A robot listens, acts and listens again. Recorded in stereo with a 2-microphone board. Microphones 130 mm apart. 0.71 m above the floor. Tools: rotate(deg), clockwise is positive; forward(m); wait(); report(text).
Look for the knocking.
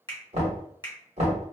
rotate(70)
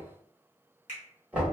rotate(10)
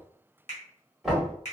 report("Facing the knocking, 1 to 2 m away.")